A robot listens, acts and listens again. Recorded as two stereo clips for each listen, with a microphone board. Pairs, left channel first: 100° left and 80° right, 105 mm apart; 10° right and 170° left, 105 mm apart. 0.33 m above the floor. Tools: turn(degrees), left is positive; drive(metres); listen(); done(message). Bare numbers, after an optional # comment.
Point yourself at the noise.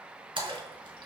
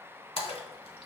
# The splash: 40° right.
turn(-40)
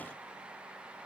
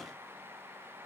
done("Facing where the splash came from. I can't hear it now.")